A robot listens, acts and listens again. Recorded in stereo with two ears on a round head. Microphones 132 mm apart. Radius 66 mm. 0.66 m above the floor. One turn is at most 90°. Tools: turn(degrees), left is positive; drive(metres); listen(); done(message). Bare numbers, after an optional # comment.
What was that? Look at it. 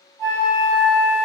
turn(30)
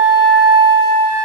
# So it is at 25° right.
turn(-25)
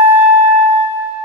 # The flute is now 10° right.
turn(-10)
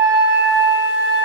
done("Facing the flute, 2 to 4 m away.")